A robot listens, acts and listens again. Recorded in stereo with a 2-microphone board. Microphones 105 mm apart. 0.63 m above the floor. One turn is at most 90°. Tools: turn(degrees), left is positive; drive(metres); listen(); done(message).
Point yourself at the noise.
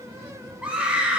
turn(degrees=-30)
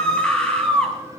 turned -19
turn(degrees=10)
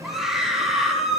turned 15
done("Facing the scream, 2 to 4 m away.")